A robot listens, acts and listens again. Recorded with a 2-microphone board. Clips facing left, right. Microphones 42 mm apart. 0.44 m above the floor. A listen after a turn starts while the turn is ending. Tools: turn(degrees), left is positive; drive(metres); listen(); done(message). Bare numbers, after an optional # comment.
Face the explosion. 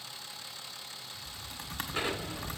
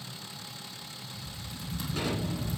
# The explosion: about 25° left or 155° left.
turn(25)
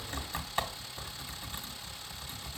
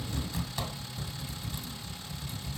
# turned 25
listen()
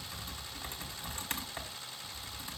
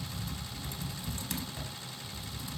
done("I heard an explosion, but can't make it out now. It was about straight ahead or 130° left.")